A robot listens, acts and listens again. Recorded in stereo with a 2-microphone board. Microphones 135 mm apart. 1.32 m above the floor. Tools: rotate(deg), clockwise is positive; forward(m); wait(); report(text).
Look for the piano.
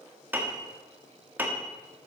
rotate(30)
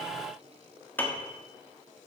rotate(-15)
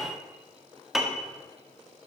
report("Found it: a piano, straight ahead, 1 to 2 m away.")